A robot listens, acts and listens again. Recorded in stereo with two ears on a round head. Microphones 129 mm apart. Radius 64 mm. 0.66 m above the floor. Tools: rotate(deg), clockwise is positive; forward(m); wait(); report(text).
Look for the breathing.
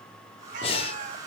rotate(-40)
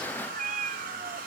wait()
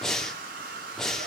report("Found it: breathing, straight ahead.")